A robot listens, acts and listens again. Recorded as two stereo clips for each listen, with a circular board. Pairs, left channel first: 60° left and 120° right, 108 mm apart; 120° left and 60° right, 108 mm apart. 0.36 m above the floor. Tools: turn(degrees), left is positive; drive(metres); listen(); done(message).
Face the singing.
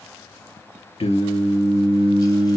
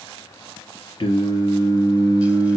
turn(degrees=75)
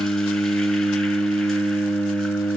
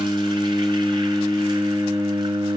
turn(degrees=20)
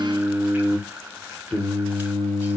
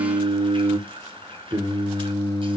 turn(degrees=-15)
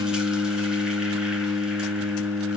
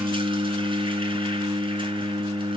done("Found it: singing, straight ahead.")